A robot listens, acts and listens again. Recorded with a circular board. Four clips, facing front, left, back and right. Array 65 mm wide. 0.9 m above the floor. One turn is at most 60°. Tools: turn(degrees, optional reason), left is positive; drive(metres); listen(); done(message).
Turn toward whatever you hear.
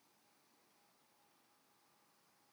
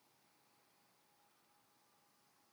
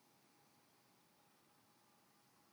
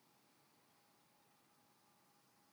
listen()
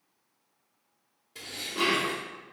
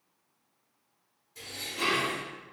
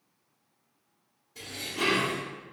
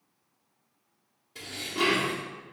turn(degrees=-50, reason="The dishes clattering: 50° right.")
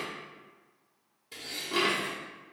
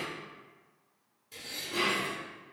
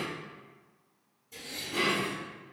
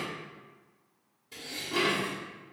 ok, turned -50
turn(degrees=-15, reason="The dishes clattering is now 15° right.")
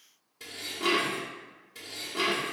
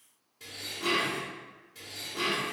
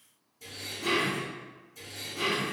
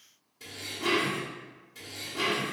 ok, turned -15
done("Found it: dishes clattering, straight ahead.")